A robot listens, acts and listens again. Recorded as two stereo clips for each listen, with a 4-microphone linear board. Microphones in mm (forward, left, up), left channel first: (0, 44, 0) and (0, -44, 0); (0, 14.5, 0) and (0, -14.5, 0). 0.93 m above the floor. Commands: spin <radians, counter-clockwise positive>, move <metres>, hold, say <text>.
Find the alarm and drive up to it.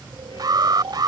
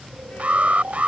spin -0.87
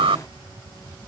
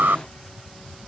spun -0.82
spin -1.48
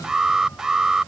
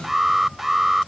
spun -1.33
move 1.0
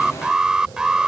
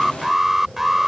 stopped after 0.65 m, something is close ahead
spin -0.17
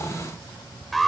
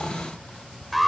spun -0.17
say Blocked. The alarm is further on, straight ahead.